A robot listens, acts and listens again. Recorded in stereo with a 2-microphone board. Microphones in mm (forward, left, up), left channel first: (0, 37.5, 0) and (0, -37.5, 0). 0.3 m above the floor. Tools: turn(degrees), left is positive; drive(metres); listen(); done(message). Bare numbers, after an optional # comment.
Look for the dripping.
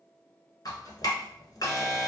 # The dripping: about 55° left or 125° left.
turn(55)
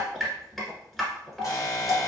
done("Found it: dripping, straight ahead.")